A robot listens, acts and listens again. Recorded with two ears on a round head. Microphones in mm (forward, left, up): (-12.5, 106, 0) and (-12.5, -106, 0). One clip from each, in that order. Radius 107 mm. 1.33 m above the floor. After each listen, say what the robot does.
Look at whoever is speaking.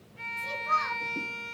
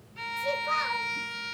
Turn 35° right.
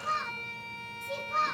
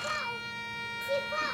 Facing the child speaking, over 4 m away.